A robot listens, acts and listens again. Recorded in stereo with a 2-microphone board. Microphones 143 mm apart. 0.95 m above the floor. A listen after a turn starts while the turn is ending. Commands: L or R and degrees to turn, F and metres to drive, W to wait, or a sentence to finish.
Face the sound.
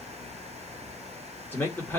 L30
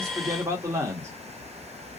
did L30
R20
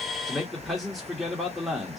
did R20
Found it: a man speaking, straight ahead.